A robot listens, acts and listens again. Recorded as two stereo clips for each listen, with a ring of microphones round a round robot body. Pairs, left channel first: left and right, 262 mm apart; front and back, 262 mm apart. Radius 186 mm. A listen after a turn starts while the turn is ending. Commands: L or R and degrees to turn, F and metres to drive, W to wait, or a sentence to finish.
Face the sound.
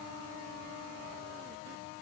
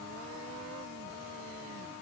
W
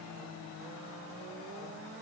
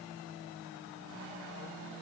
W
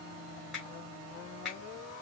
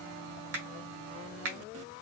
L180
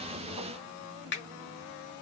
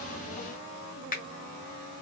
L55
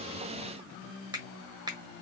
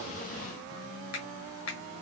R20
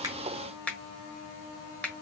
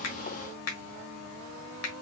Facing the finger snap, 1 to 2 m away.